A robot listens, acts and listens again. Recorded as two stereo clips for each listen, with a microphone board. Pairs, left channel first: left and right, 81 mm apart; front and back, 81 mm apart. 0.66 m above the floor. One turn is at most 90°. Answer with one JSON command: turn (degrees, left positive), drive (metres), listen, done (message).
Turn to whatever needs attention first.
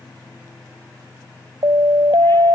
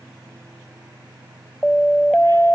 {"turn": -75}
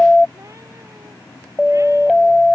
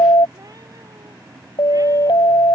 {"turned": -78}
{"done": "Facing the siren."}